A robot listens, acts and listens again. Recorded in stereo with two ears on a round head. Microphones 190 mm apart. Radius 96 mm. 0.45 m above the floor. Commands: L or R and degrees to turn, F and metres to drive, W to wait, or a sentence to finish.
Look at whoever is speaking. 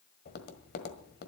W
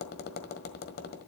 W
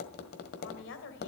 L60
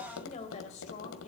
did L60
L35
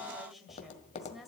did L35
Found it: a woman speaking, straight ahead, 2 to 4 m away.